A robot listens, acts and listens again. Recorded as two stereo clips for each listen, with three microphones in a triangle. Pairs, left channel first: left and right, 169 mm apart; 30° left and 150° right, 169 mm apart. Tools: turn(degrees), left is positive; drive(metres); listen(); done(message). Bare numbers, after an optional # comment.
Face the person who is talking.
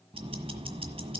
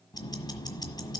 listen()
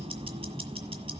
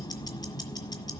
listen()
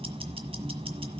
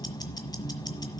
done("I can't make out anyone speaking to turn to.")